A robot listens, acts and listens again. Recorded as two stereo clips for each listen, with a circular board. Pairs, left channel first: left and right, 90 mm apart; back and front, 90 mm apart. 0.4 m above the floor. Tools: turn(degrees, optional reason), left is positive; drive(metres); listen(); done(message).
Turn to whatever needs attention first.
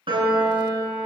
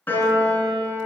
listen()
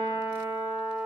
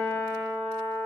listen()
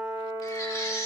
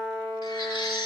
turn(degrees=150, reason="The baby crying: 150° left.")
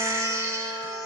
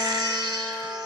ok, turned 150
turn(degrees=-30, reason="The baby crying is now 30° right.")
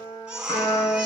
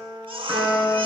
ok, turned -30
turn(degrees=-10, reason="The baby crying is now 10° right.")
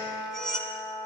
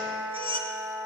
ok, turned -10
done("Facing the baby crying, 1 to 2 m away.")